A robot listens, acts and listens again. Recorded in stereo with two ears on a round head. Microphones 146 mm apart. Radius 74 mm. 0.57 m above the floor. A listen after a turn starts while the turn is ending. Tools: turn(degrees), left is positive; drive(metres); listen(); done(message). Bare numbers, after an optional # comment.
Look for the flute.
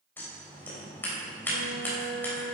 turn(-90)
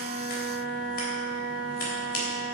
# So it is at 10° left.
turn(10)
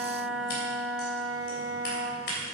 done("Facing the flute.")